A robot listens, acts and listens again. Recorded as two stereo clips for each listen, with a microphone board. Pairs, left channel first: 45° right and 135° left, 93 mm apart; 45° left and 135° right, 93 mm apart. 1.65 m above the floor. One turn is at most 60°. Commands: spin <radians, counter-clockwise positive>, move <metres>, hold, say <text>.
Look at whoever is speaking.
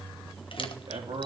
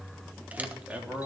spin 1.05
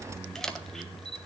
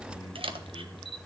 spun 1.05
spin 1.05
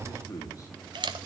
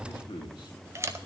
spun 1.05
spin 0.17
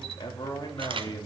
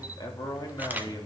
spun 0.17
say Found it: a man speaking, straight ahead.